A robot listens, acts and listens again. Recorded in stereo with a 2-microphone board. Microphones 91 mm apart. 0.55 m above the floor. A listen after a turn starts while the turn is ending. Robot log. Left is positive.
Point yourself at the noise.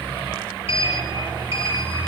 cmd yaw +90
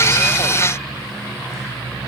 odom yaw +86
cmd idle
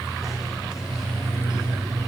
end: Facing the sliding door.